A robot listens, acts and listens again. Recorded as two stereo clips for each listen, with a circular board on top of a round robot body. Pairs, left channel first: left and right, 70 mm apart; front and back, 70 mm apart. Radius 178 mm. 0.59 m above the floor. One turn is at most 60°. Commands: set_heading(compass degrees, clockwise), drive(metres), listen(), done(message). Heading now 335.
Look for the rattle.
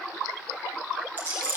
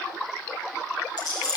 set_heading(5)
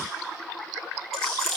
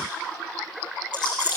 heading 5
done("Facing the rattle.")